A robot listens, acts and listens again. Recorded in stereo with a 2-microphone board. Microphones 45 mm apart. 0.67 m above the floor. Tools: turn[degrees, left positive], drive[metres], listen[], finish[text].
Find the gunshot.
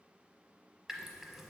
Action: listen[]
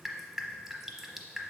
Action: listen[]
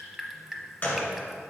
Thought: The gunshot: about 45° left or 135° left.
Action: turn[45]
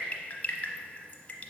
Action: listen[]
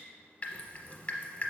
Action: finish[I heard a gunshot, but can't make it out now. It was about straight ahead or 90° left.]